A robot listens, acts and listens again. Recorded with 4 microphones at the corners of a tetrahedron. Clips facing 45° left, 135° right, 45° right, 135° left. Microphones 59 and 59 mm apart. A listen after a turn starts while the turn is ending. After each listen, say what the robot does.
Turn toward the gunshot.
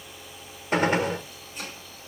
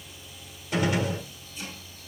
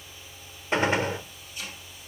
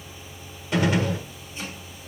Turn 10° left.
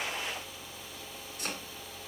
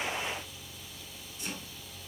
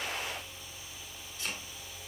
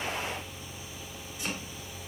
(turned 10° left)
Facing where the gunshot came from. I can't hear it now.